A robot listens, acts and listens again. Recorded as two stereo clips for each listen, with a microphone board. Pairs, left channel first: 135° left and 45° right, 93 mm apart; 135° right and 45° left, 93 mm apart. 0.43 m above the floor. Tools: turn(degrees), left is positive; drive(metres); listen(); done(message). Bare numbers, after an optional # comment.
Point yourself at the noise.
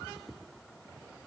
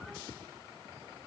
listen()
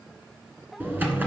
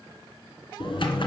# The typing on a keyboard: 115° right.
turn(-115)
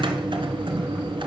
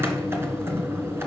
# The typing on a keyboard is now 20° right.
turn(-20)
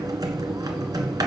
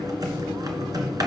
done("Found it: typing on a keyboard, straight ahead, 1 to 2 m away.")